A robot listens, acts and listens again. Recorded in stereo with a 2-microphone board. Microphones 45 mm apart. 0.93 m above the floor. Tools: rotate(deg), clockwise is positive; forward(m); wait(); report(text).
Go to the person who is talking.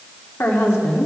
rotate(-75)
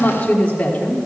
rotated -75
rotate(-30)
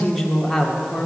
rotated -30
forward(1.0)
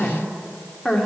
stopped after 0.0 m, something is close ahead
report("Something is in my way. I am facing the woman speaking but have not reached it.")